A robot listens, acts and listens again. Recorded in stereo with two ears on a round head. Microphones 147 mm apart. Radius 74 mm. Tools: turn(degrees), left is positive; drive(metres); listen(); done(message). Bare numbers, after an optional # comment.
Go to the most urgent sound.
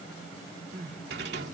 # The crying: about 55° right or 125° right.
turn(-55)
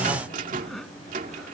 drive(1.0)
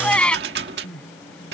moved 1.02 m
drive(1.0)
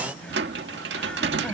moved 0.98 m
listen()
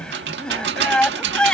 drive(1.0)
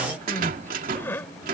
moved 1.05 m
# The crying is now 15° left.
turn(15)
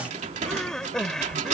drive(1.0)
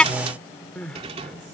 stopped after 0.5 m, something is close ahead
done("I am next to the crying.")